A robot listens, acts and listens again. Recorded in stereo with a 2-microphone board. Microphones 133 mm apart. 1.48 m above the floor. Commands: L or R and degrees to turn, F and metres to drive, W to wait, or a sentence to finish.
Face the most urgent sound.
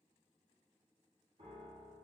W
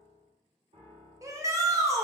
R25
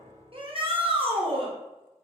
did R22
R135
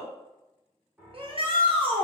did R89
R45
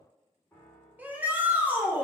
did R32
R15
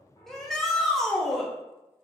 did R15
Found it: a shout, straight ahead, under 1 m away.